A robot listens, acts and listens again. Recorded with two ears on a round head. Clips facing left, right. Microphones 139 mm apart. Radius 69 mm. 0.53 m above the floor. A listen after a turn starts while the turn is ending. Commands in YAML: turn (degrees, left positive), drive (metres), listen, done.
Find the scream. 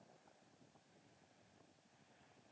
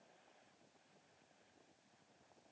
listen: true
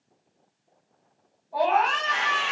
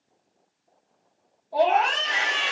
turn: -55
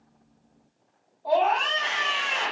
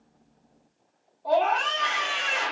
turn: -10
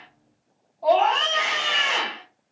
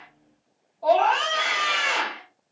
done: "Facing the scream."